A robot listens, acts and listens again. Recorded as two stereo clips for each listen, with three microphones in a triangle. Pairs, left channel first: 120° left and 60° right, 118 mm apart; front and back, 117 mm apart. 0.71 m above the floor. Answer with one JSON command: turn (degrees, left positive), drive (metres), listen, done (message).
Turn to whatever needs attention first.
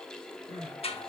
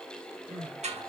{"turn": -25}
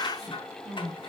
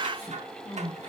{"turn": -10}
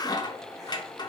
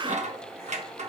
{"listen": true}
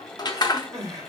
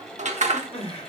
{"done": "Facing the crying."}